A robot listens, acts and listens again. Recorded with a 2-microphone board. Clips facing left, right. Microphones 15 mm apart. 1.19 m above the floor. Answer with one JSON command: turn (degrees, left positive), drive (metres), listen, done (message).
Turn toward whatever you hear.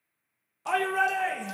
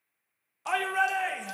{"turn": -30}
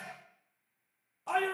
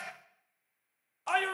{"turn": -140}
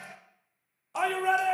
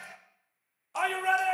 {"done": "Found it: a shout, straight ahead."}